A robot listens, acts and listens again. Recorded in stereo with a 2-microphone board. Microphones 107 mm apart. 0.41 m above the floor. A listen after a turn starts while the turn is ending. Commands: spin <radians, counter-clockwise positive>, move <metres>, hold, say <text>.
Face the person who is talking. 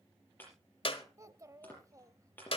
spin -0.52
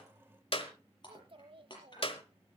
spin -2.09
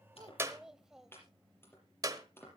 say Facing the child speaking, under 1 m away.